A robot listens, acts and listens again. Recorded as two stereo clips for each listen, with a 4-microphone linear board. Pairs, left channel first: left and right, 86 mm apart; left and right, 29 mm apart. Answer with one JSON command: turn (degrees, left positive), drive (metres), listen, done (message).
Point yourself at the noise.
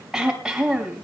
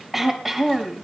{"turn": -30}
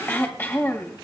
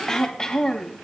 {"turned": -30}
{"turn": 25}
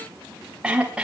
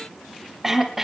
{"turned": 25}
{"turn": -10}
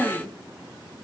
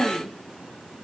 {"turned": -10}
{"done": "Facing the throat clearing."}